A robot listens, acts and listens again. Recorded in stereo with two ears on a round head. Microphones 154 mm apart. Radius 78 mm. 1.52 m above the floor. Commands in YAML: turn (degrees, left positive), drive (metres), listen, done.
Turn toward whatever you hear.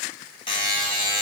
turn: 30
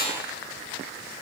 turn: 115
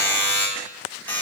turn: 10
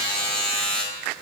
done: "Found it: a buzzer, straight ahead, 2 to 4 m away."